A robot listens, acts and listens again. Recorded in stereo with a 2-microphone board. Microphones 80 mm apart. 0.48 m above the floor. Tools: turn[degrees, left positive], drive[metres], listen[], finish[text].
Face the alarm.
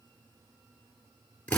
Action: listen[]
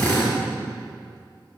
Action: listen[]
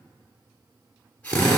Action: finish[I can't make out an alarm, only a drill.]